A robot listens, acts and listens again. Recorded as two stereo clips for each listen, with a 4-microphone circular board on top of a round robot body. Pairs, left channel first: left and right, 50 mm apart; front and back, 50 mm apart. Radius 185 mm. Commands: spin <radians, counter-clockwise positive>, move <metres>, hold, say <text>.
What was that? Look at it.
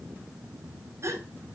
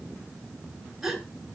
spin -1.66
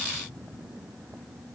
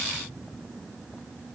say Facing where the gasp came from. I can't hear it now.